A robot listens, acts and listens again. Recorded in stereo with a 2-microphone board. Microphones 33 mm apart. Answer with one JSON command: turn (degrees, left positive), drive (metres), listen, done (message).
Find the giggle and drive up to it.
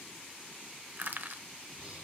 {"listen": true}
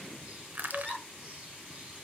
{"turn": 15}
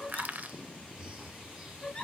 {"turn": 150}
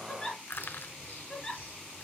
{"turn": 20}
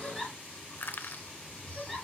{"drive": 1.0}
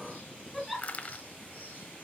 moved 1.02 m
{"drive": 1.0}
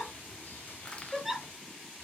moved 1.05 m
{"turn": -10}
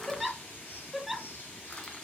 {"drive": 1.0}
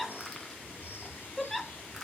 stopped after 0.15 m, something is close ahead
{"done": "Arrived at the giggle, straight ahead."}